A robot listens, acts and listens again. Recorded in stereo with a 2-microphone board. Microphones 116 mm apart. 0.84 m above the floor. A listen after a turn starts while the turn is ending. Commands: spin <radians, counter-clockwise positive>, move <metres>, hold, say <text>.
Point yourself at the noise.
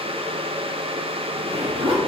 spin -0.96
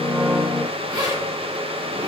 spin -0.87
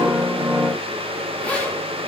spin 0.26
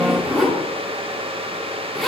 say Facing the zipper.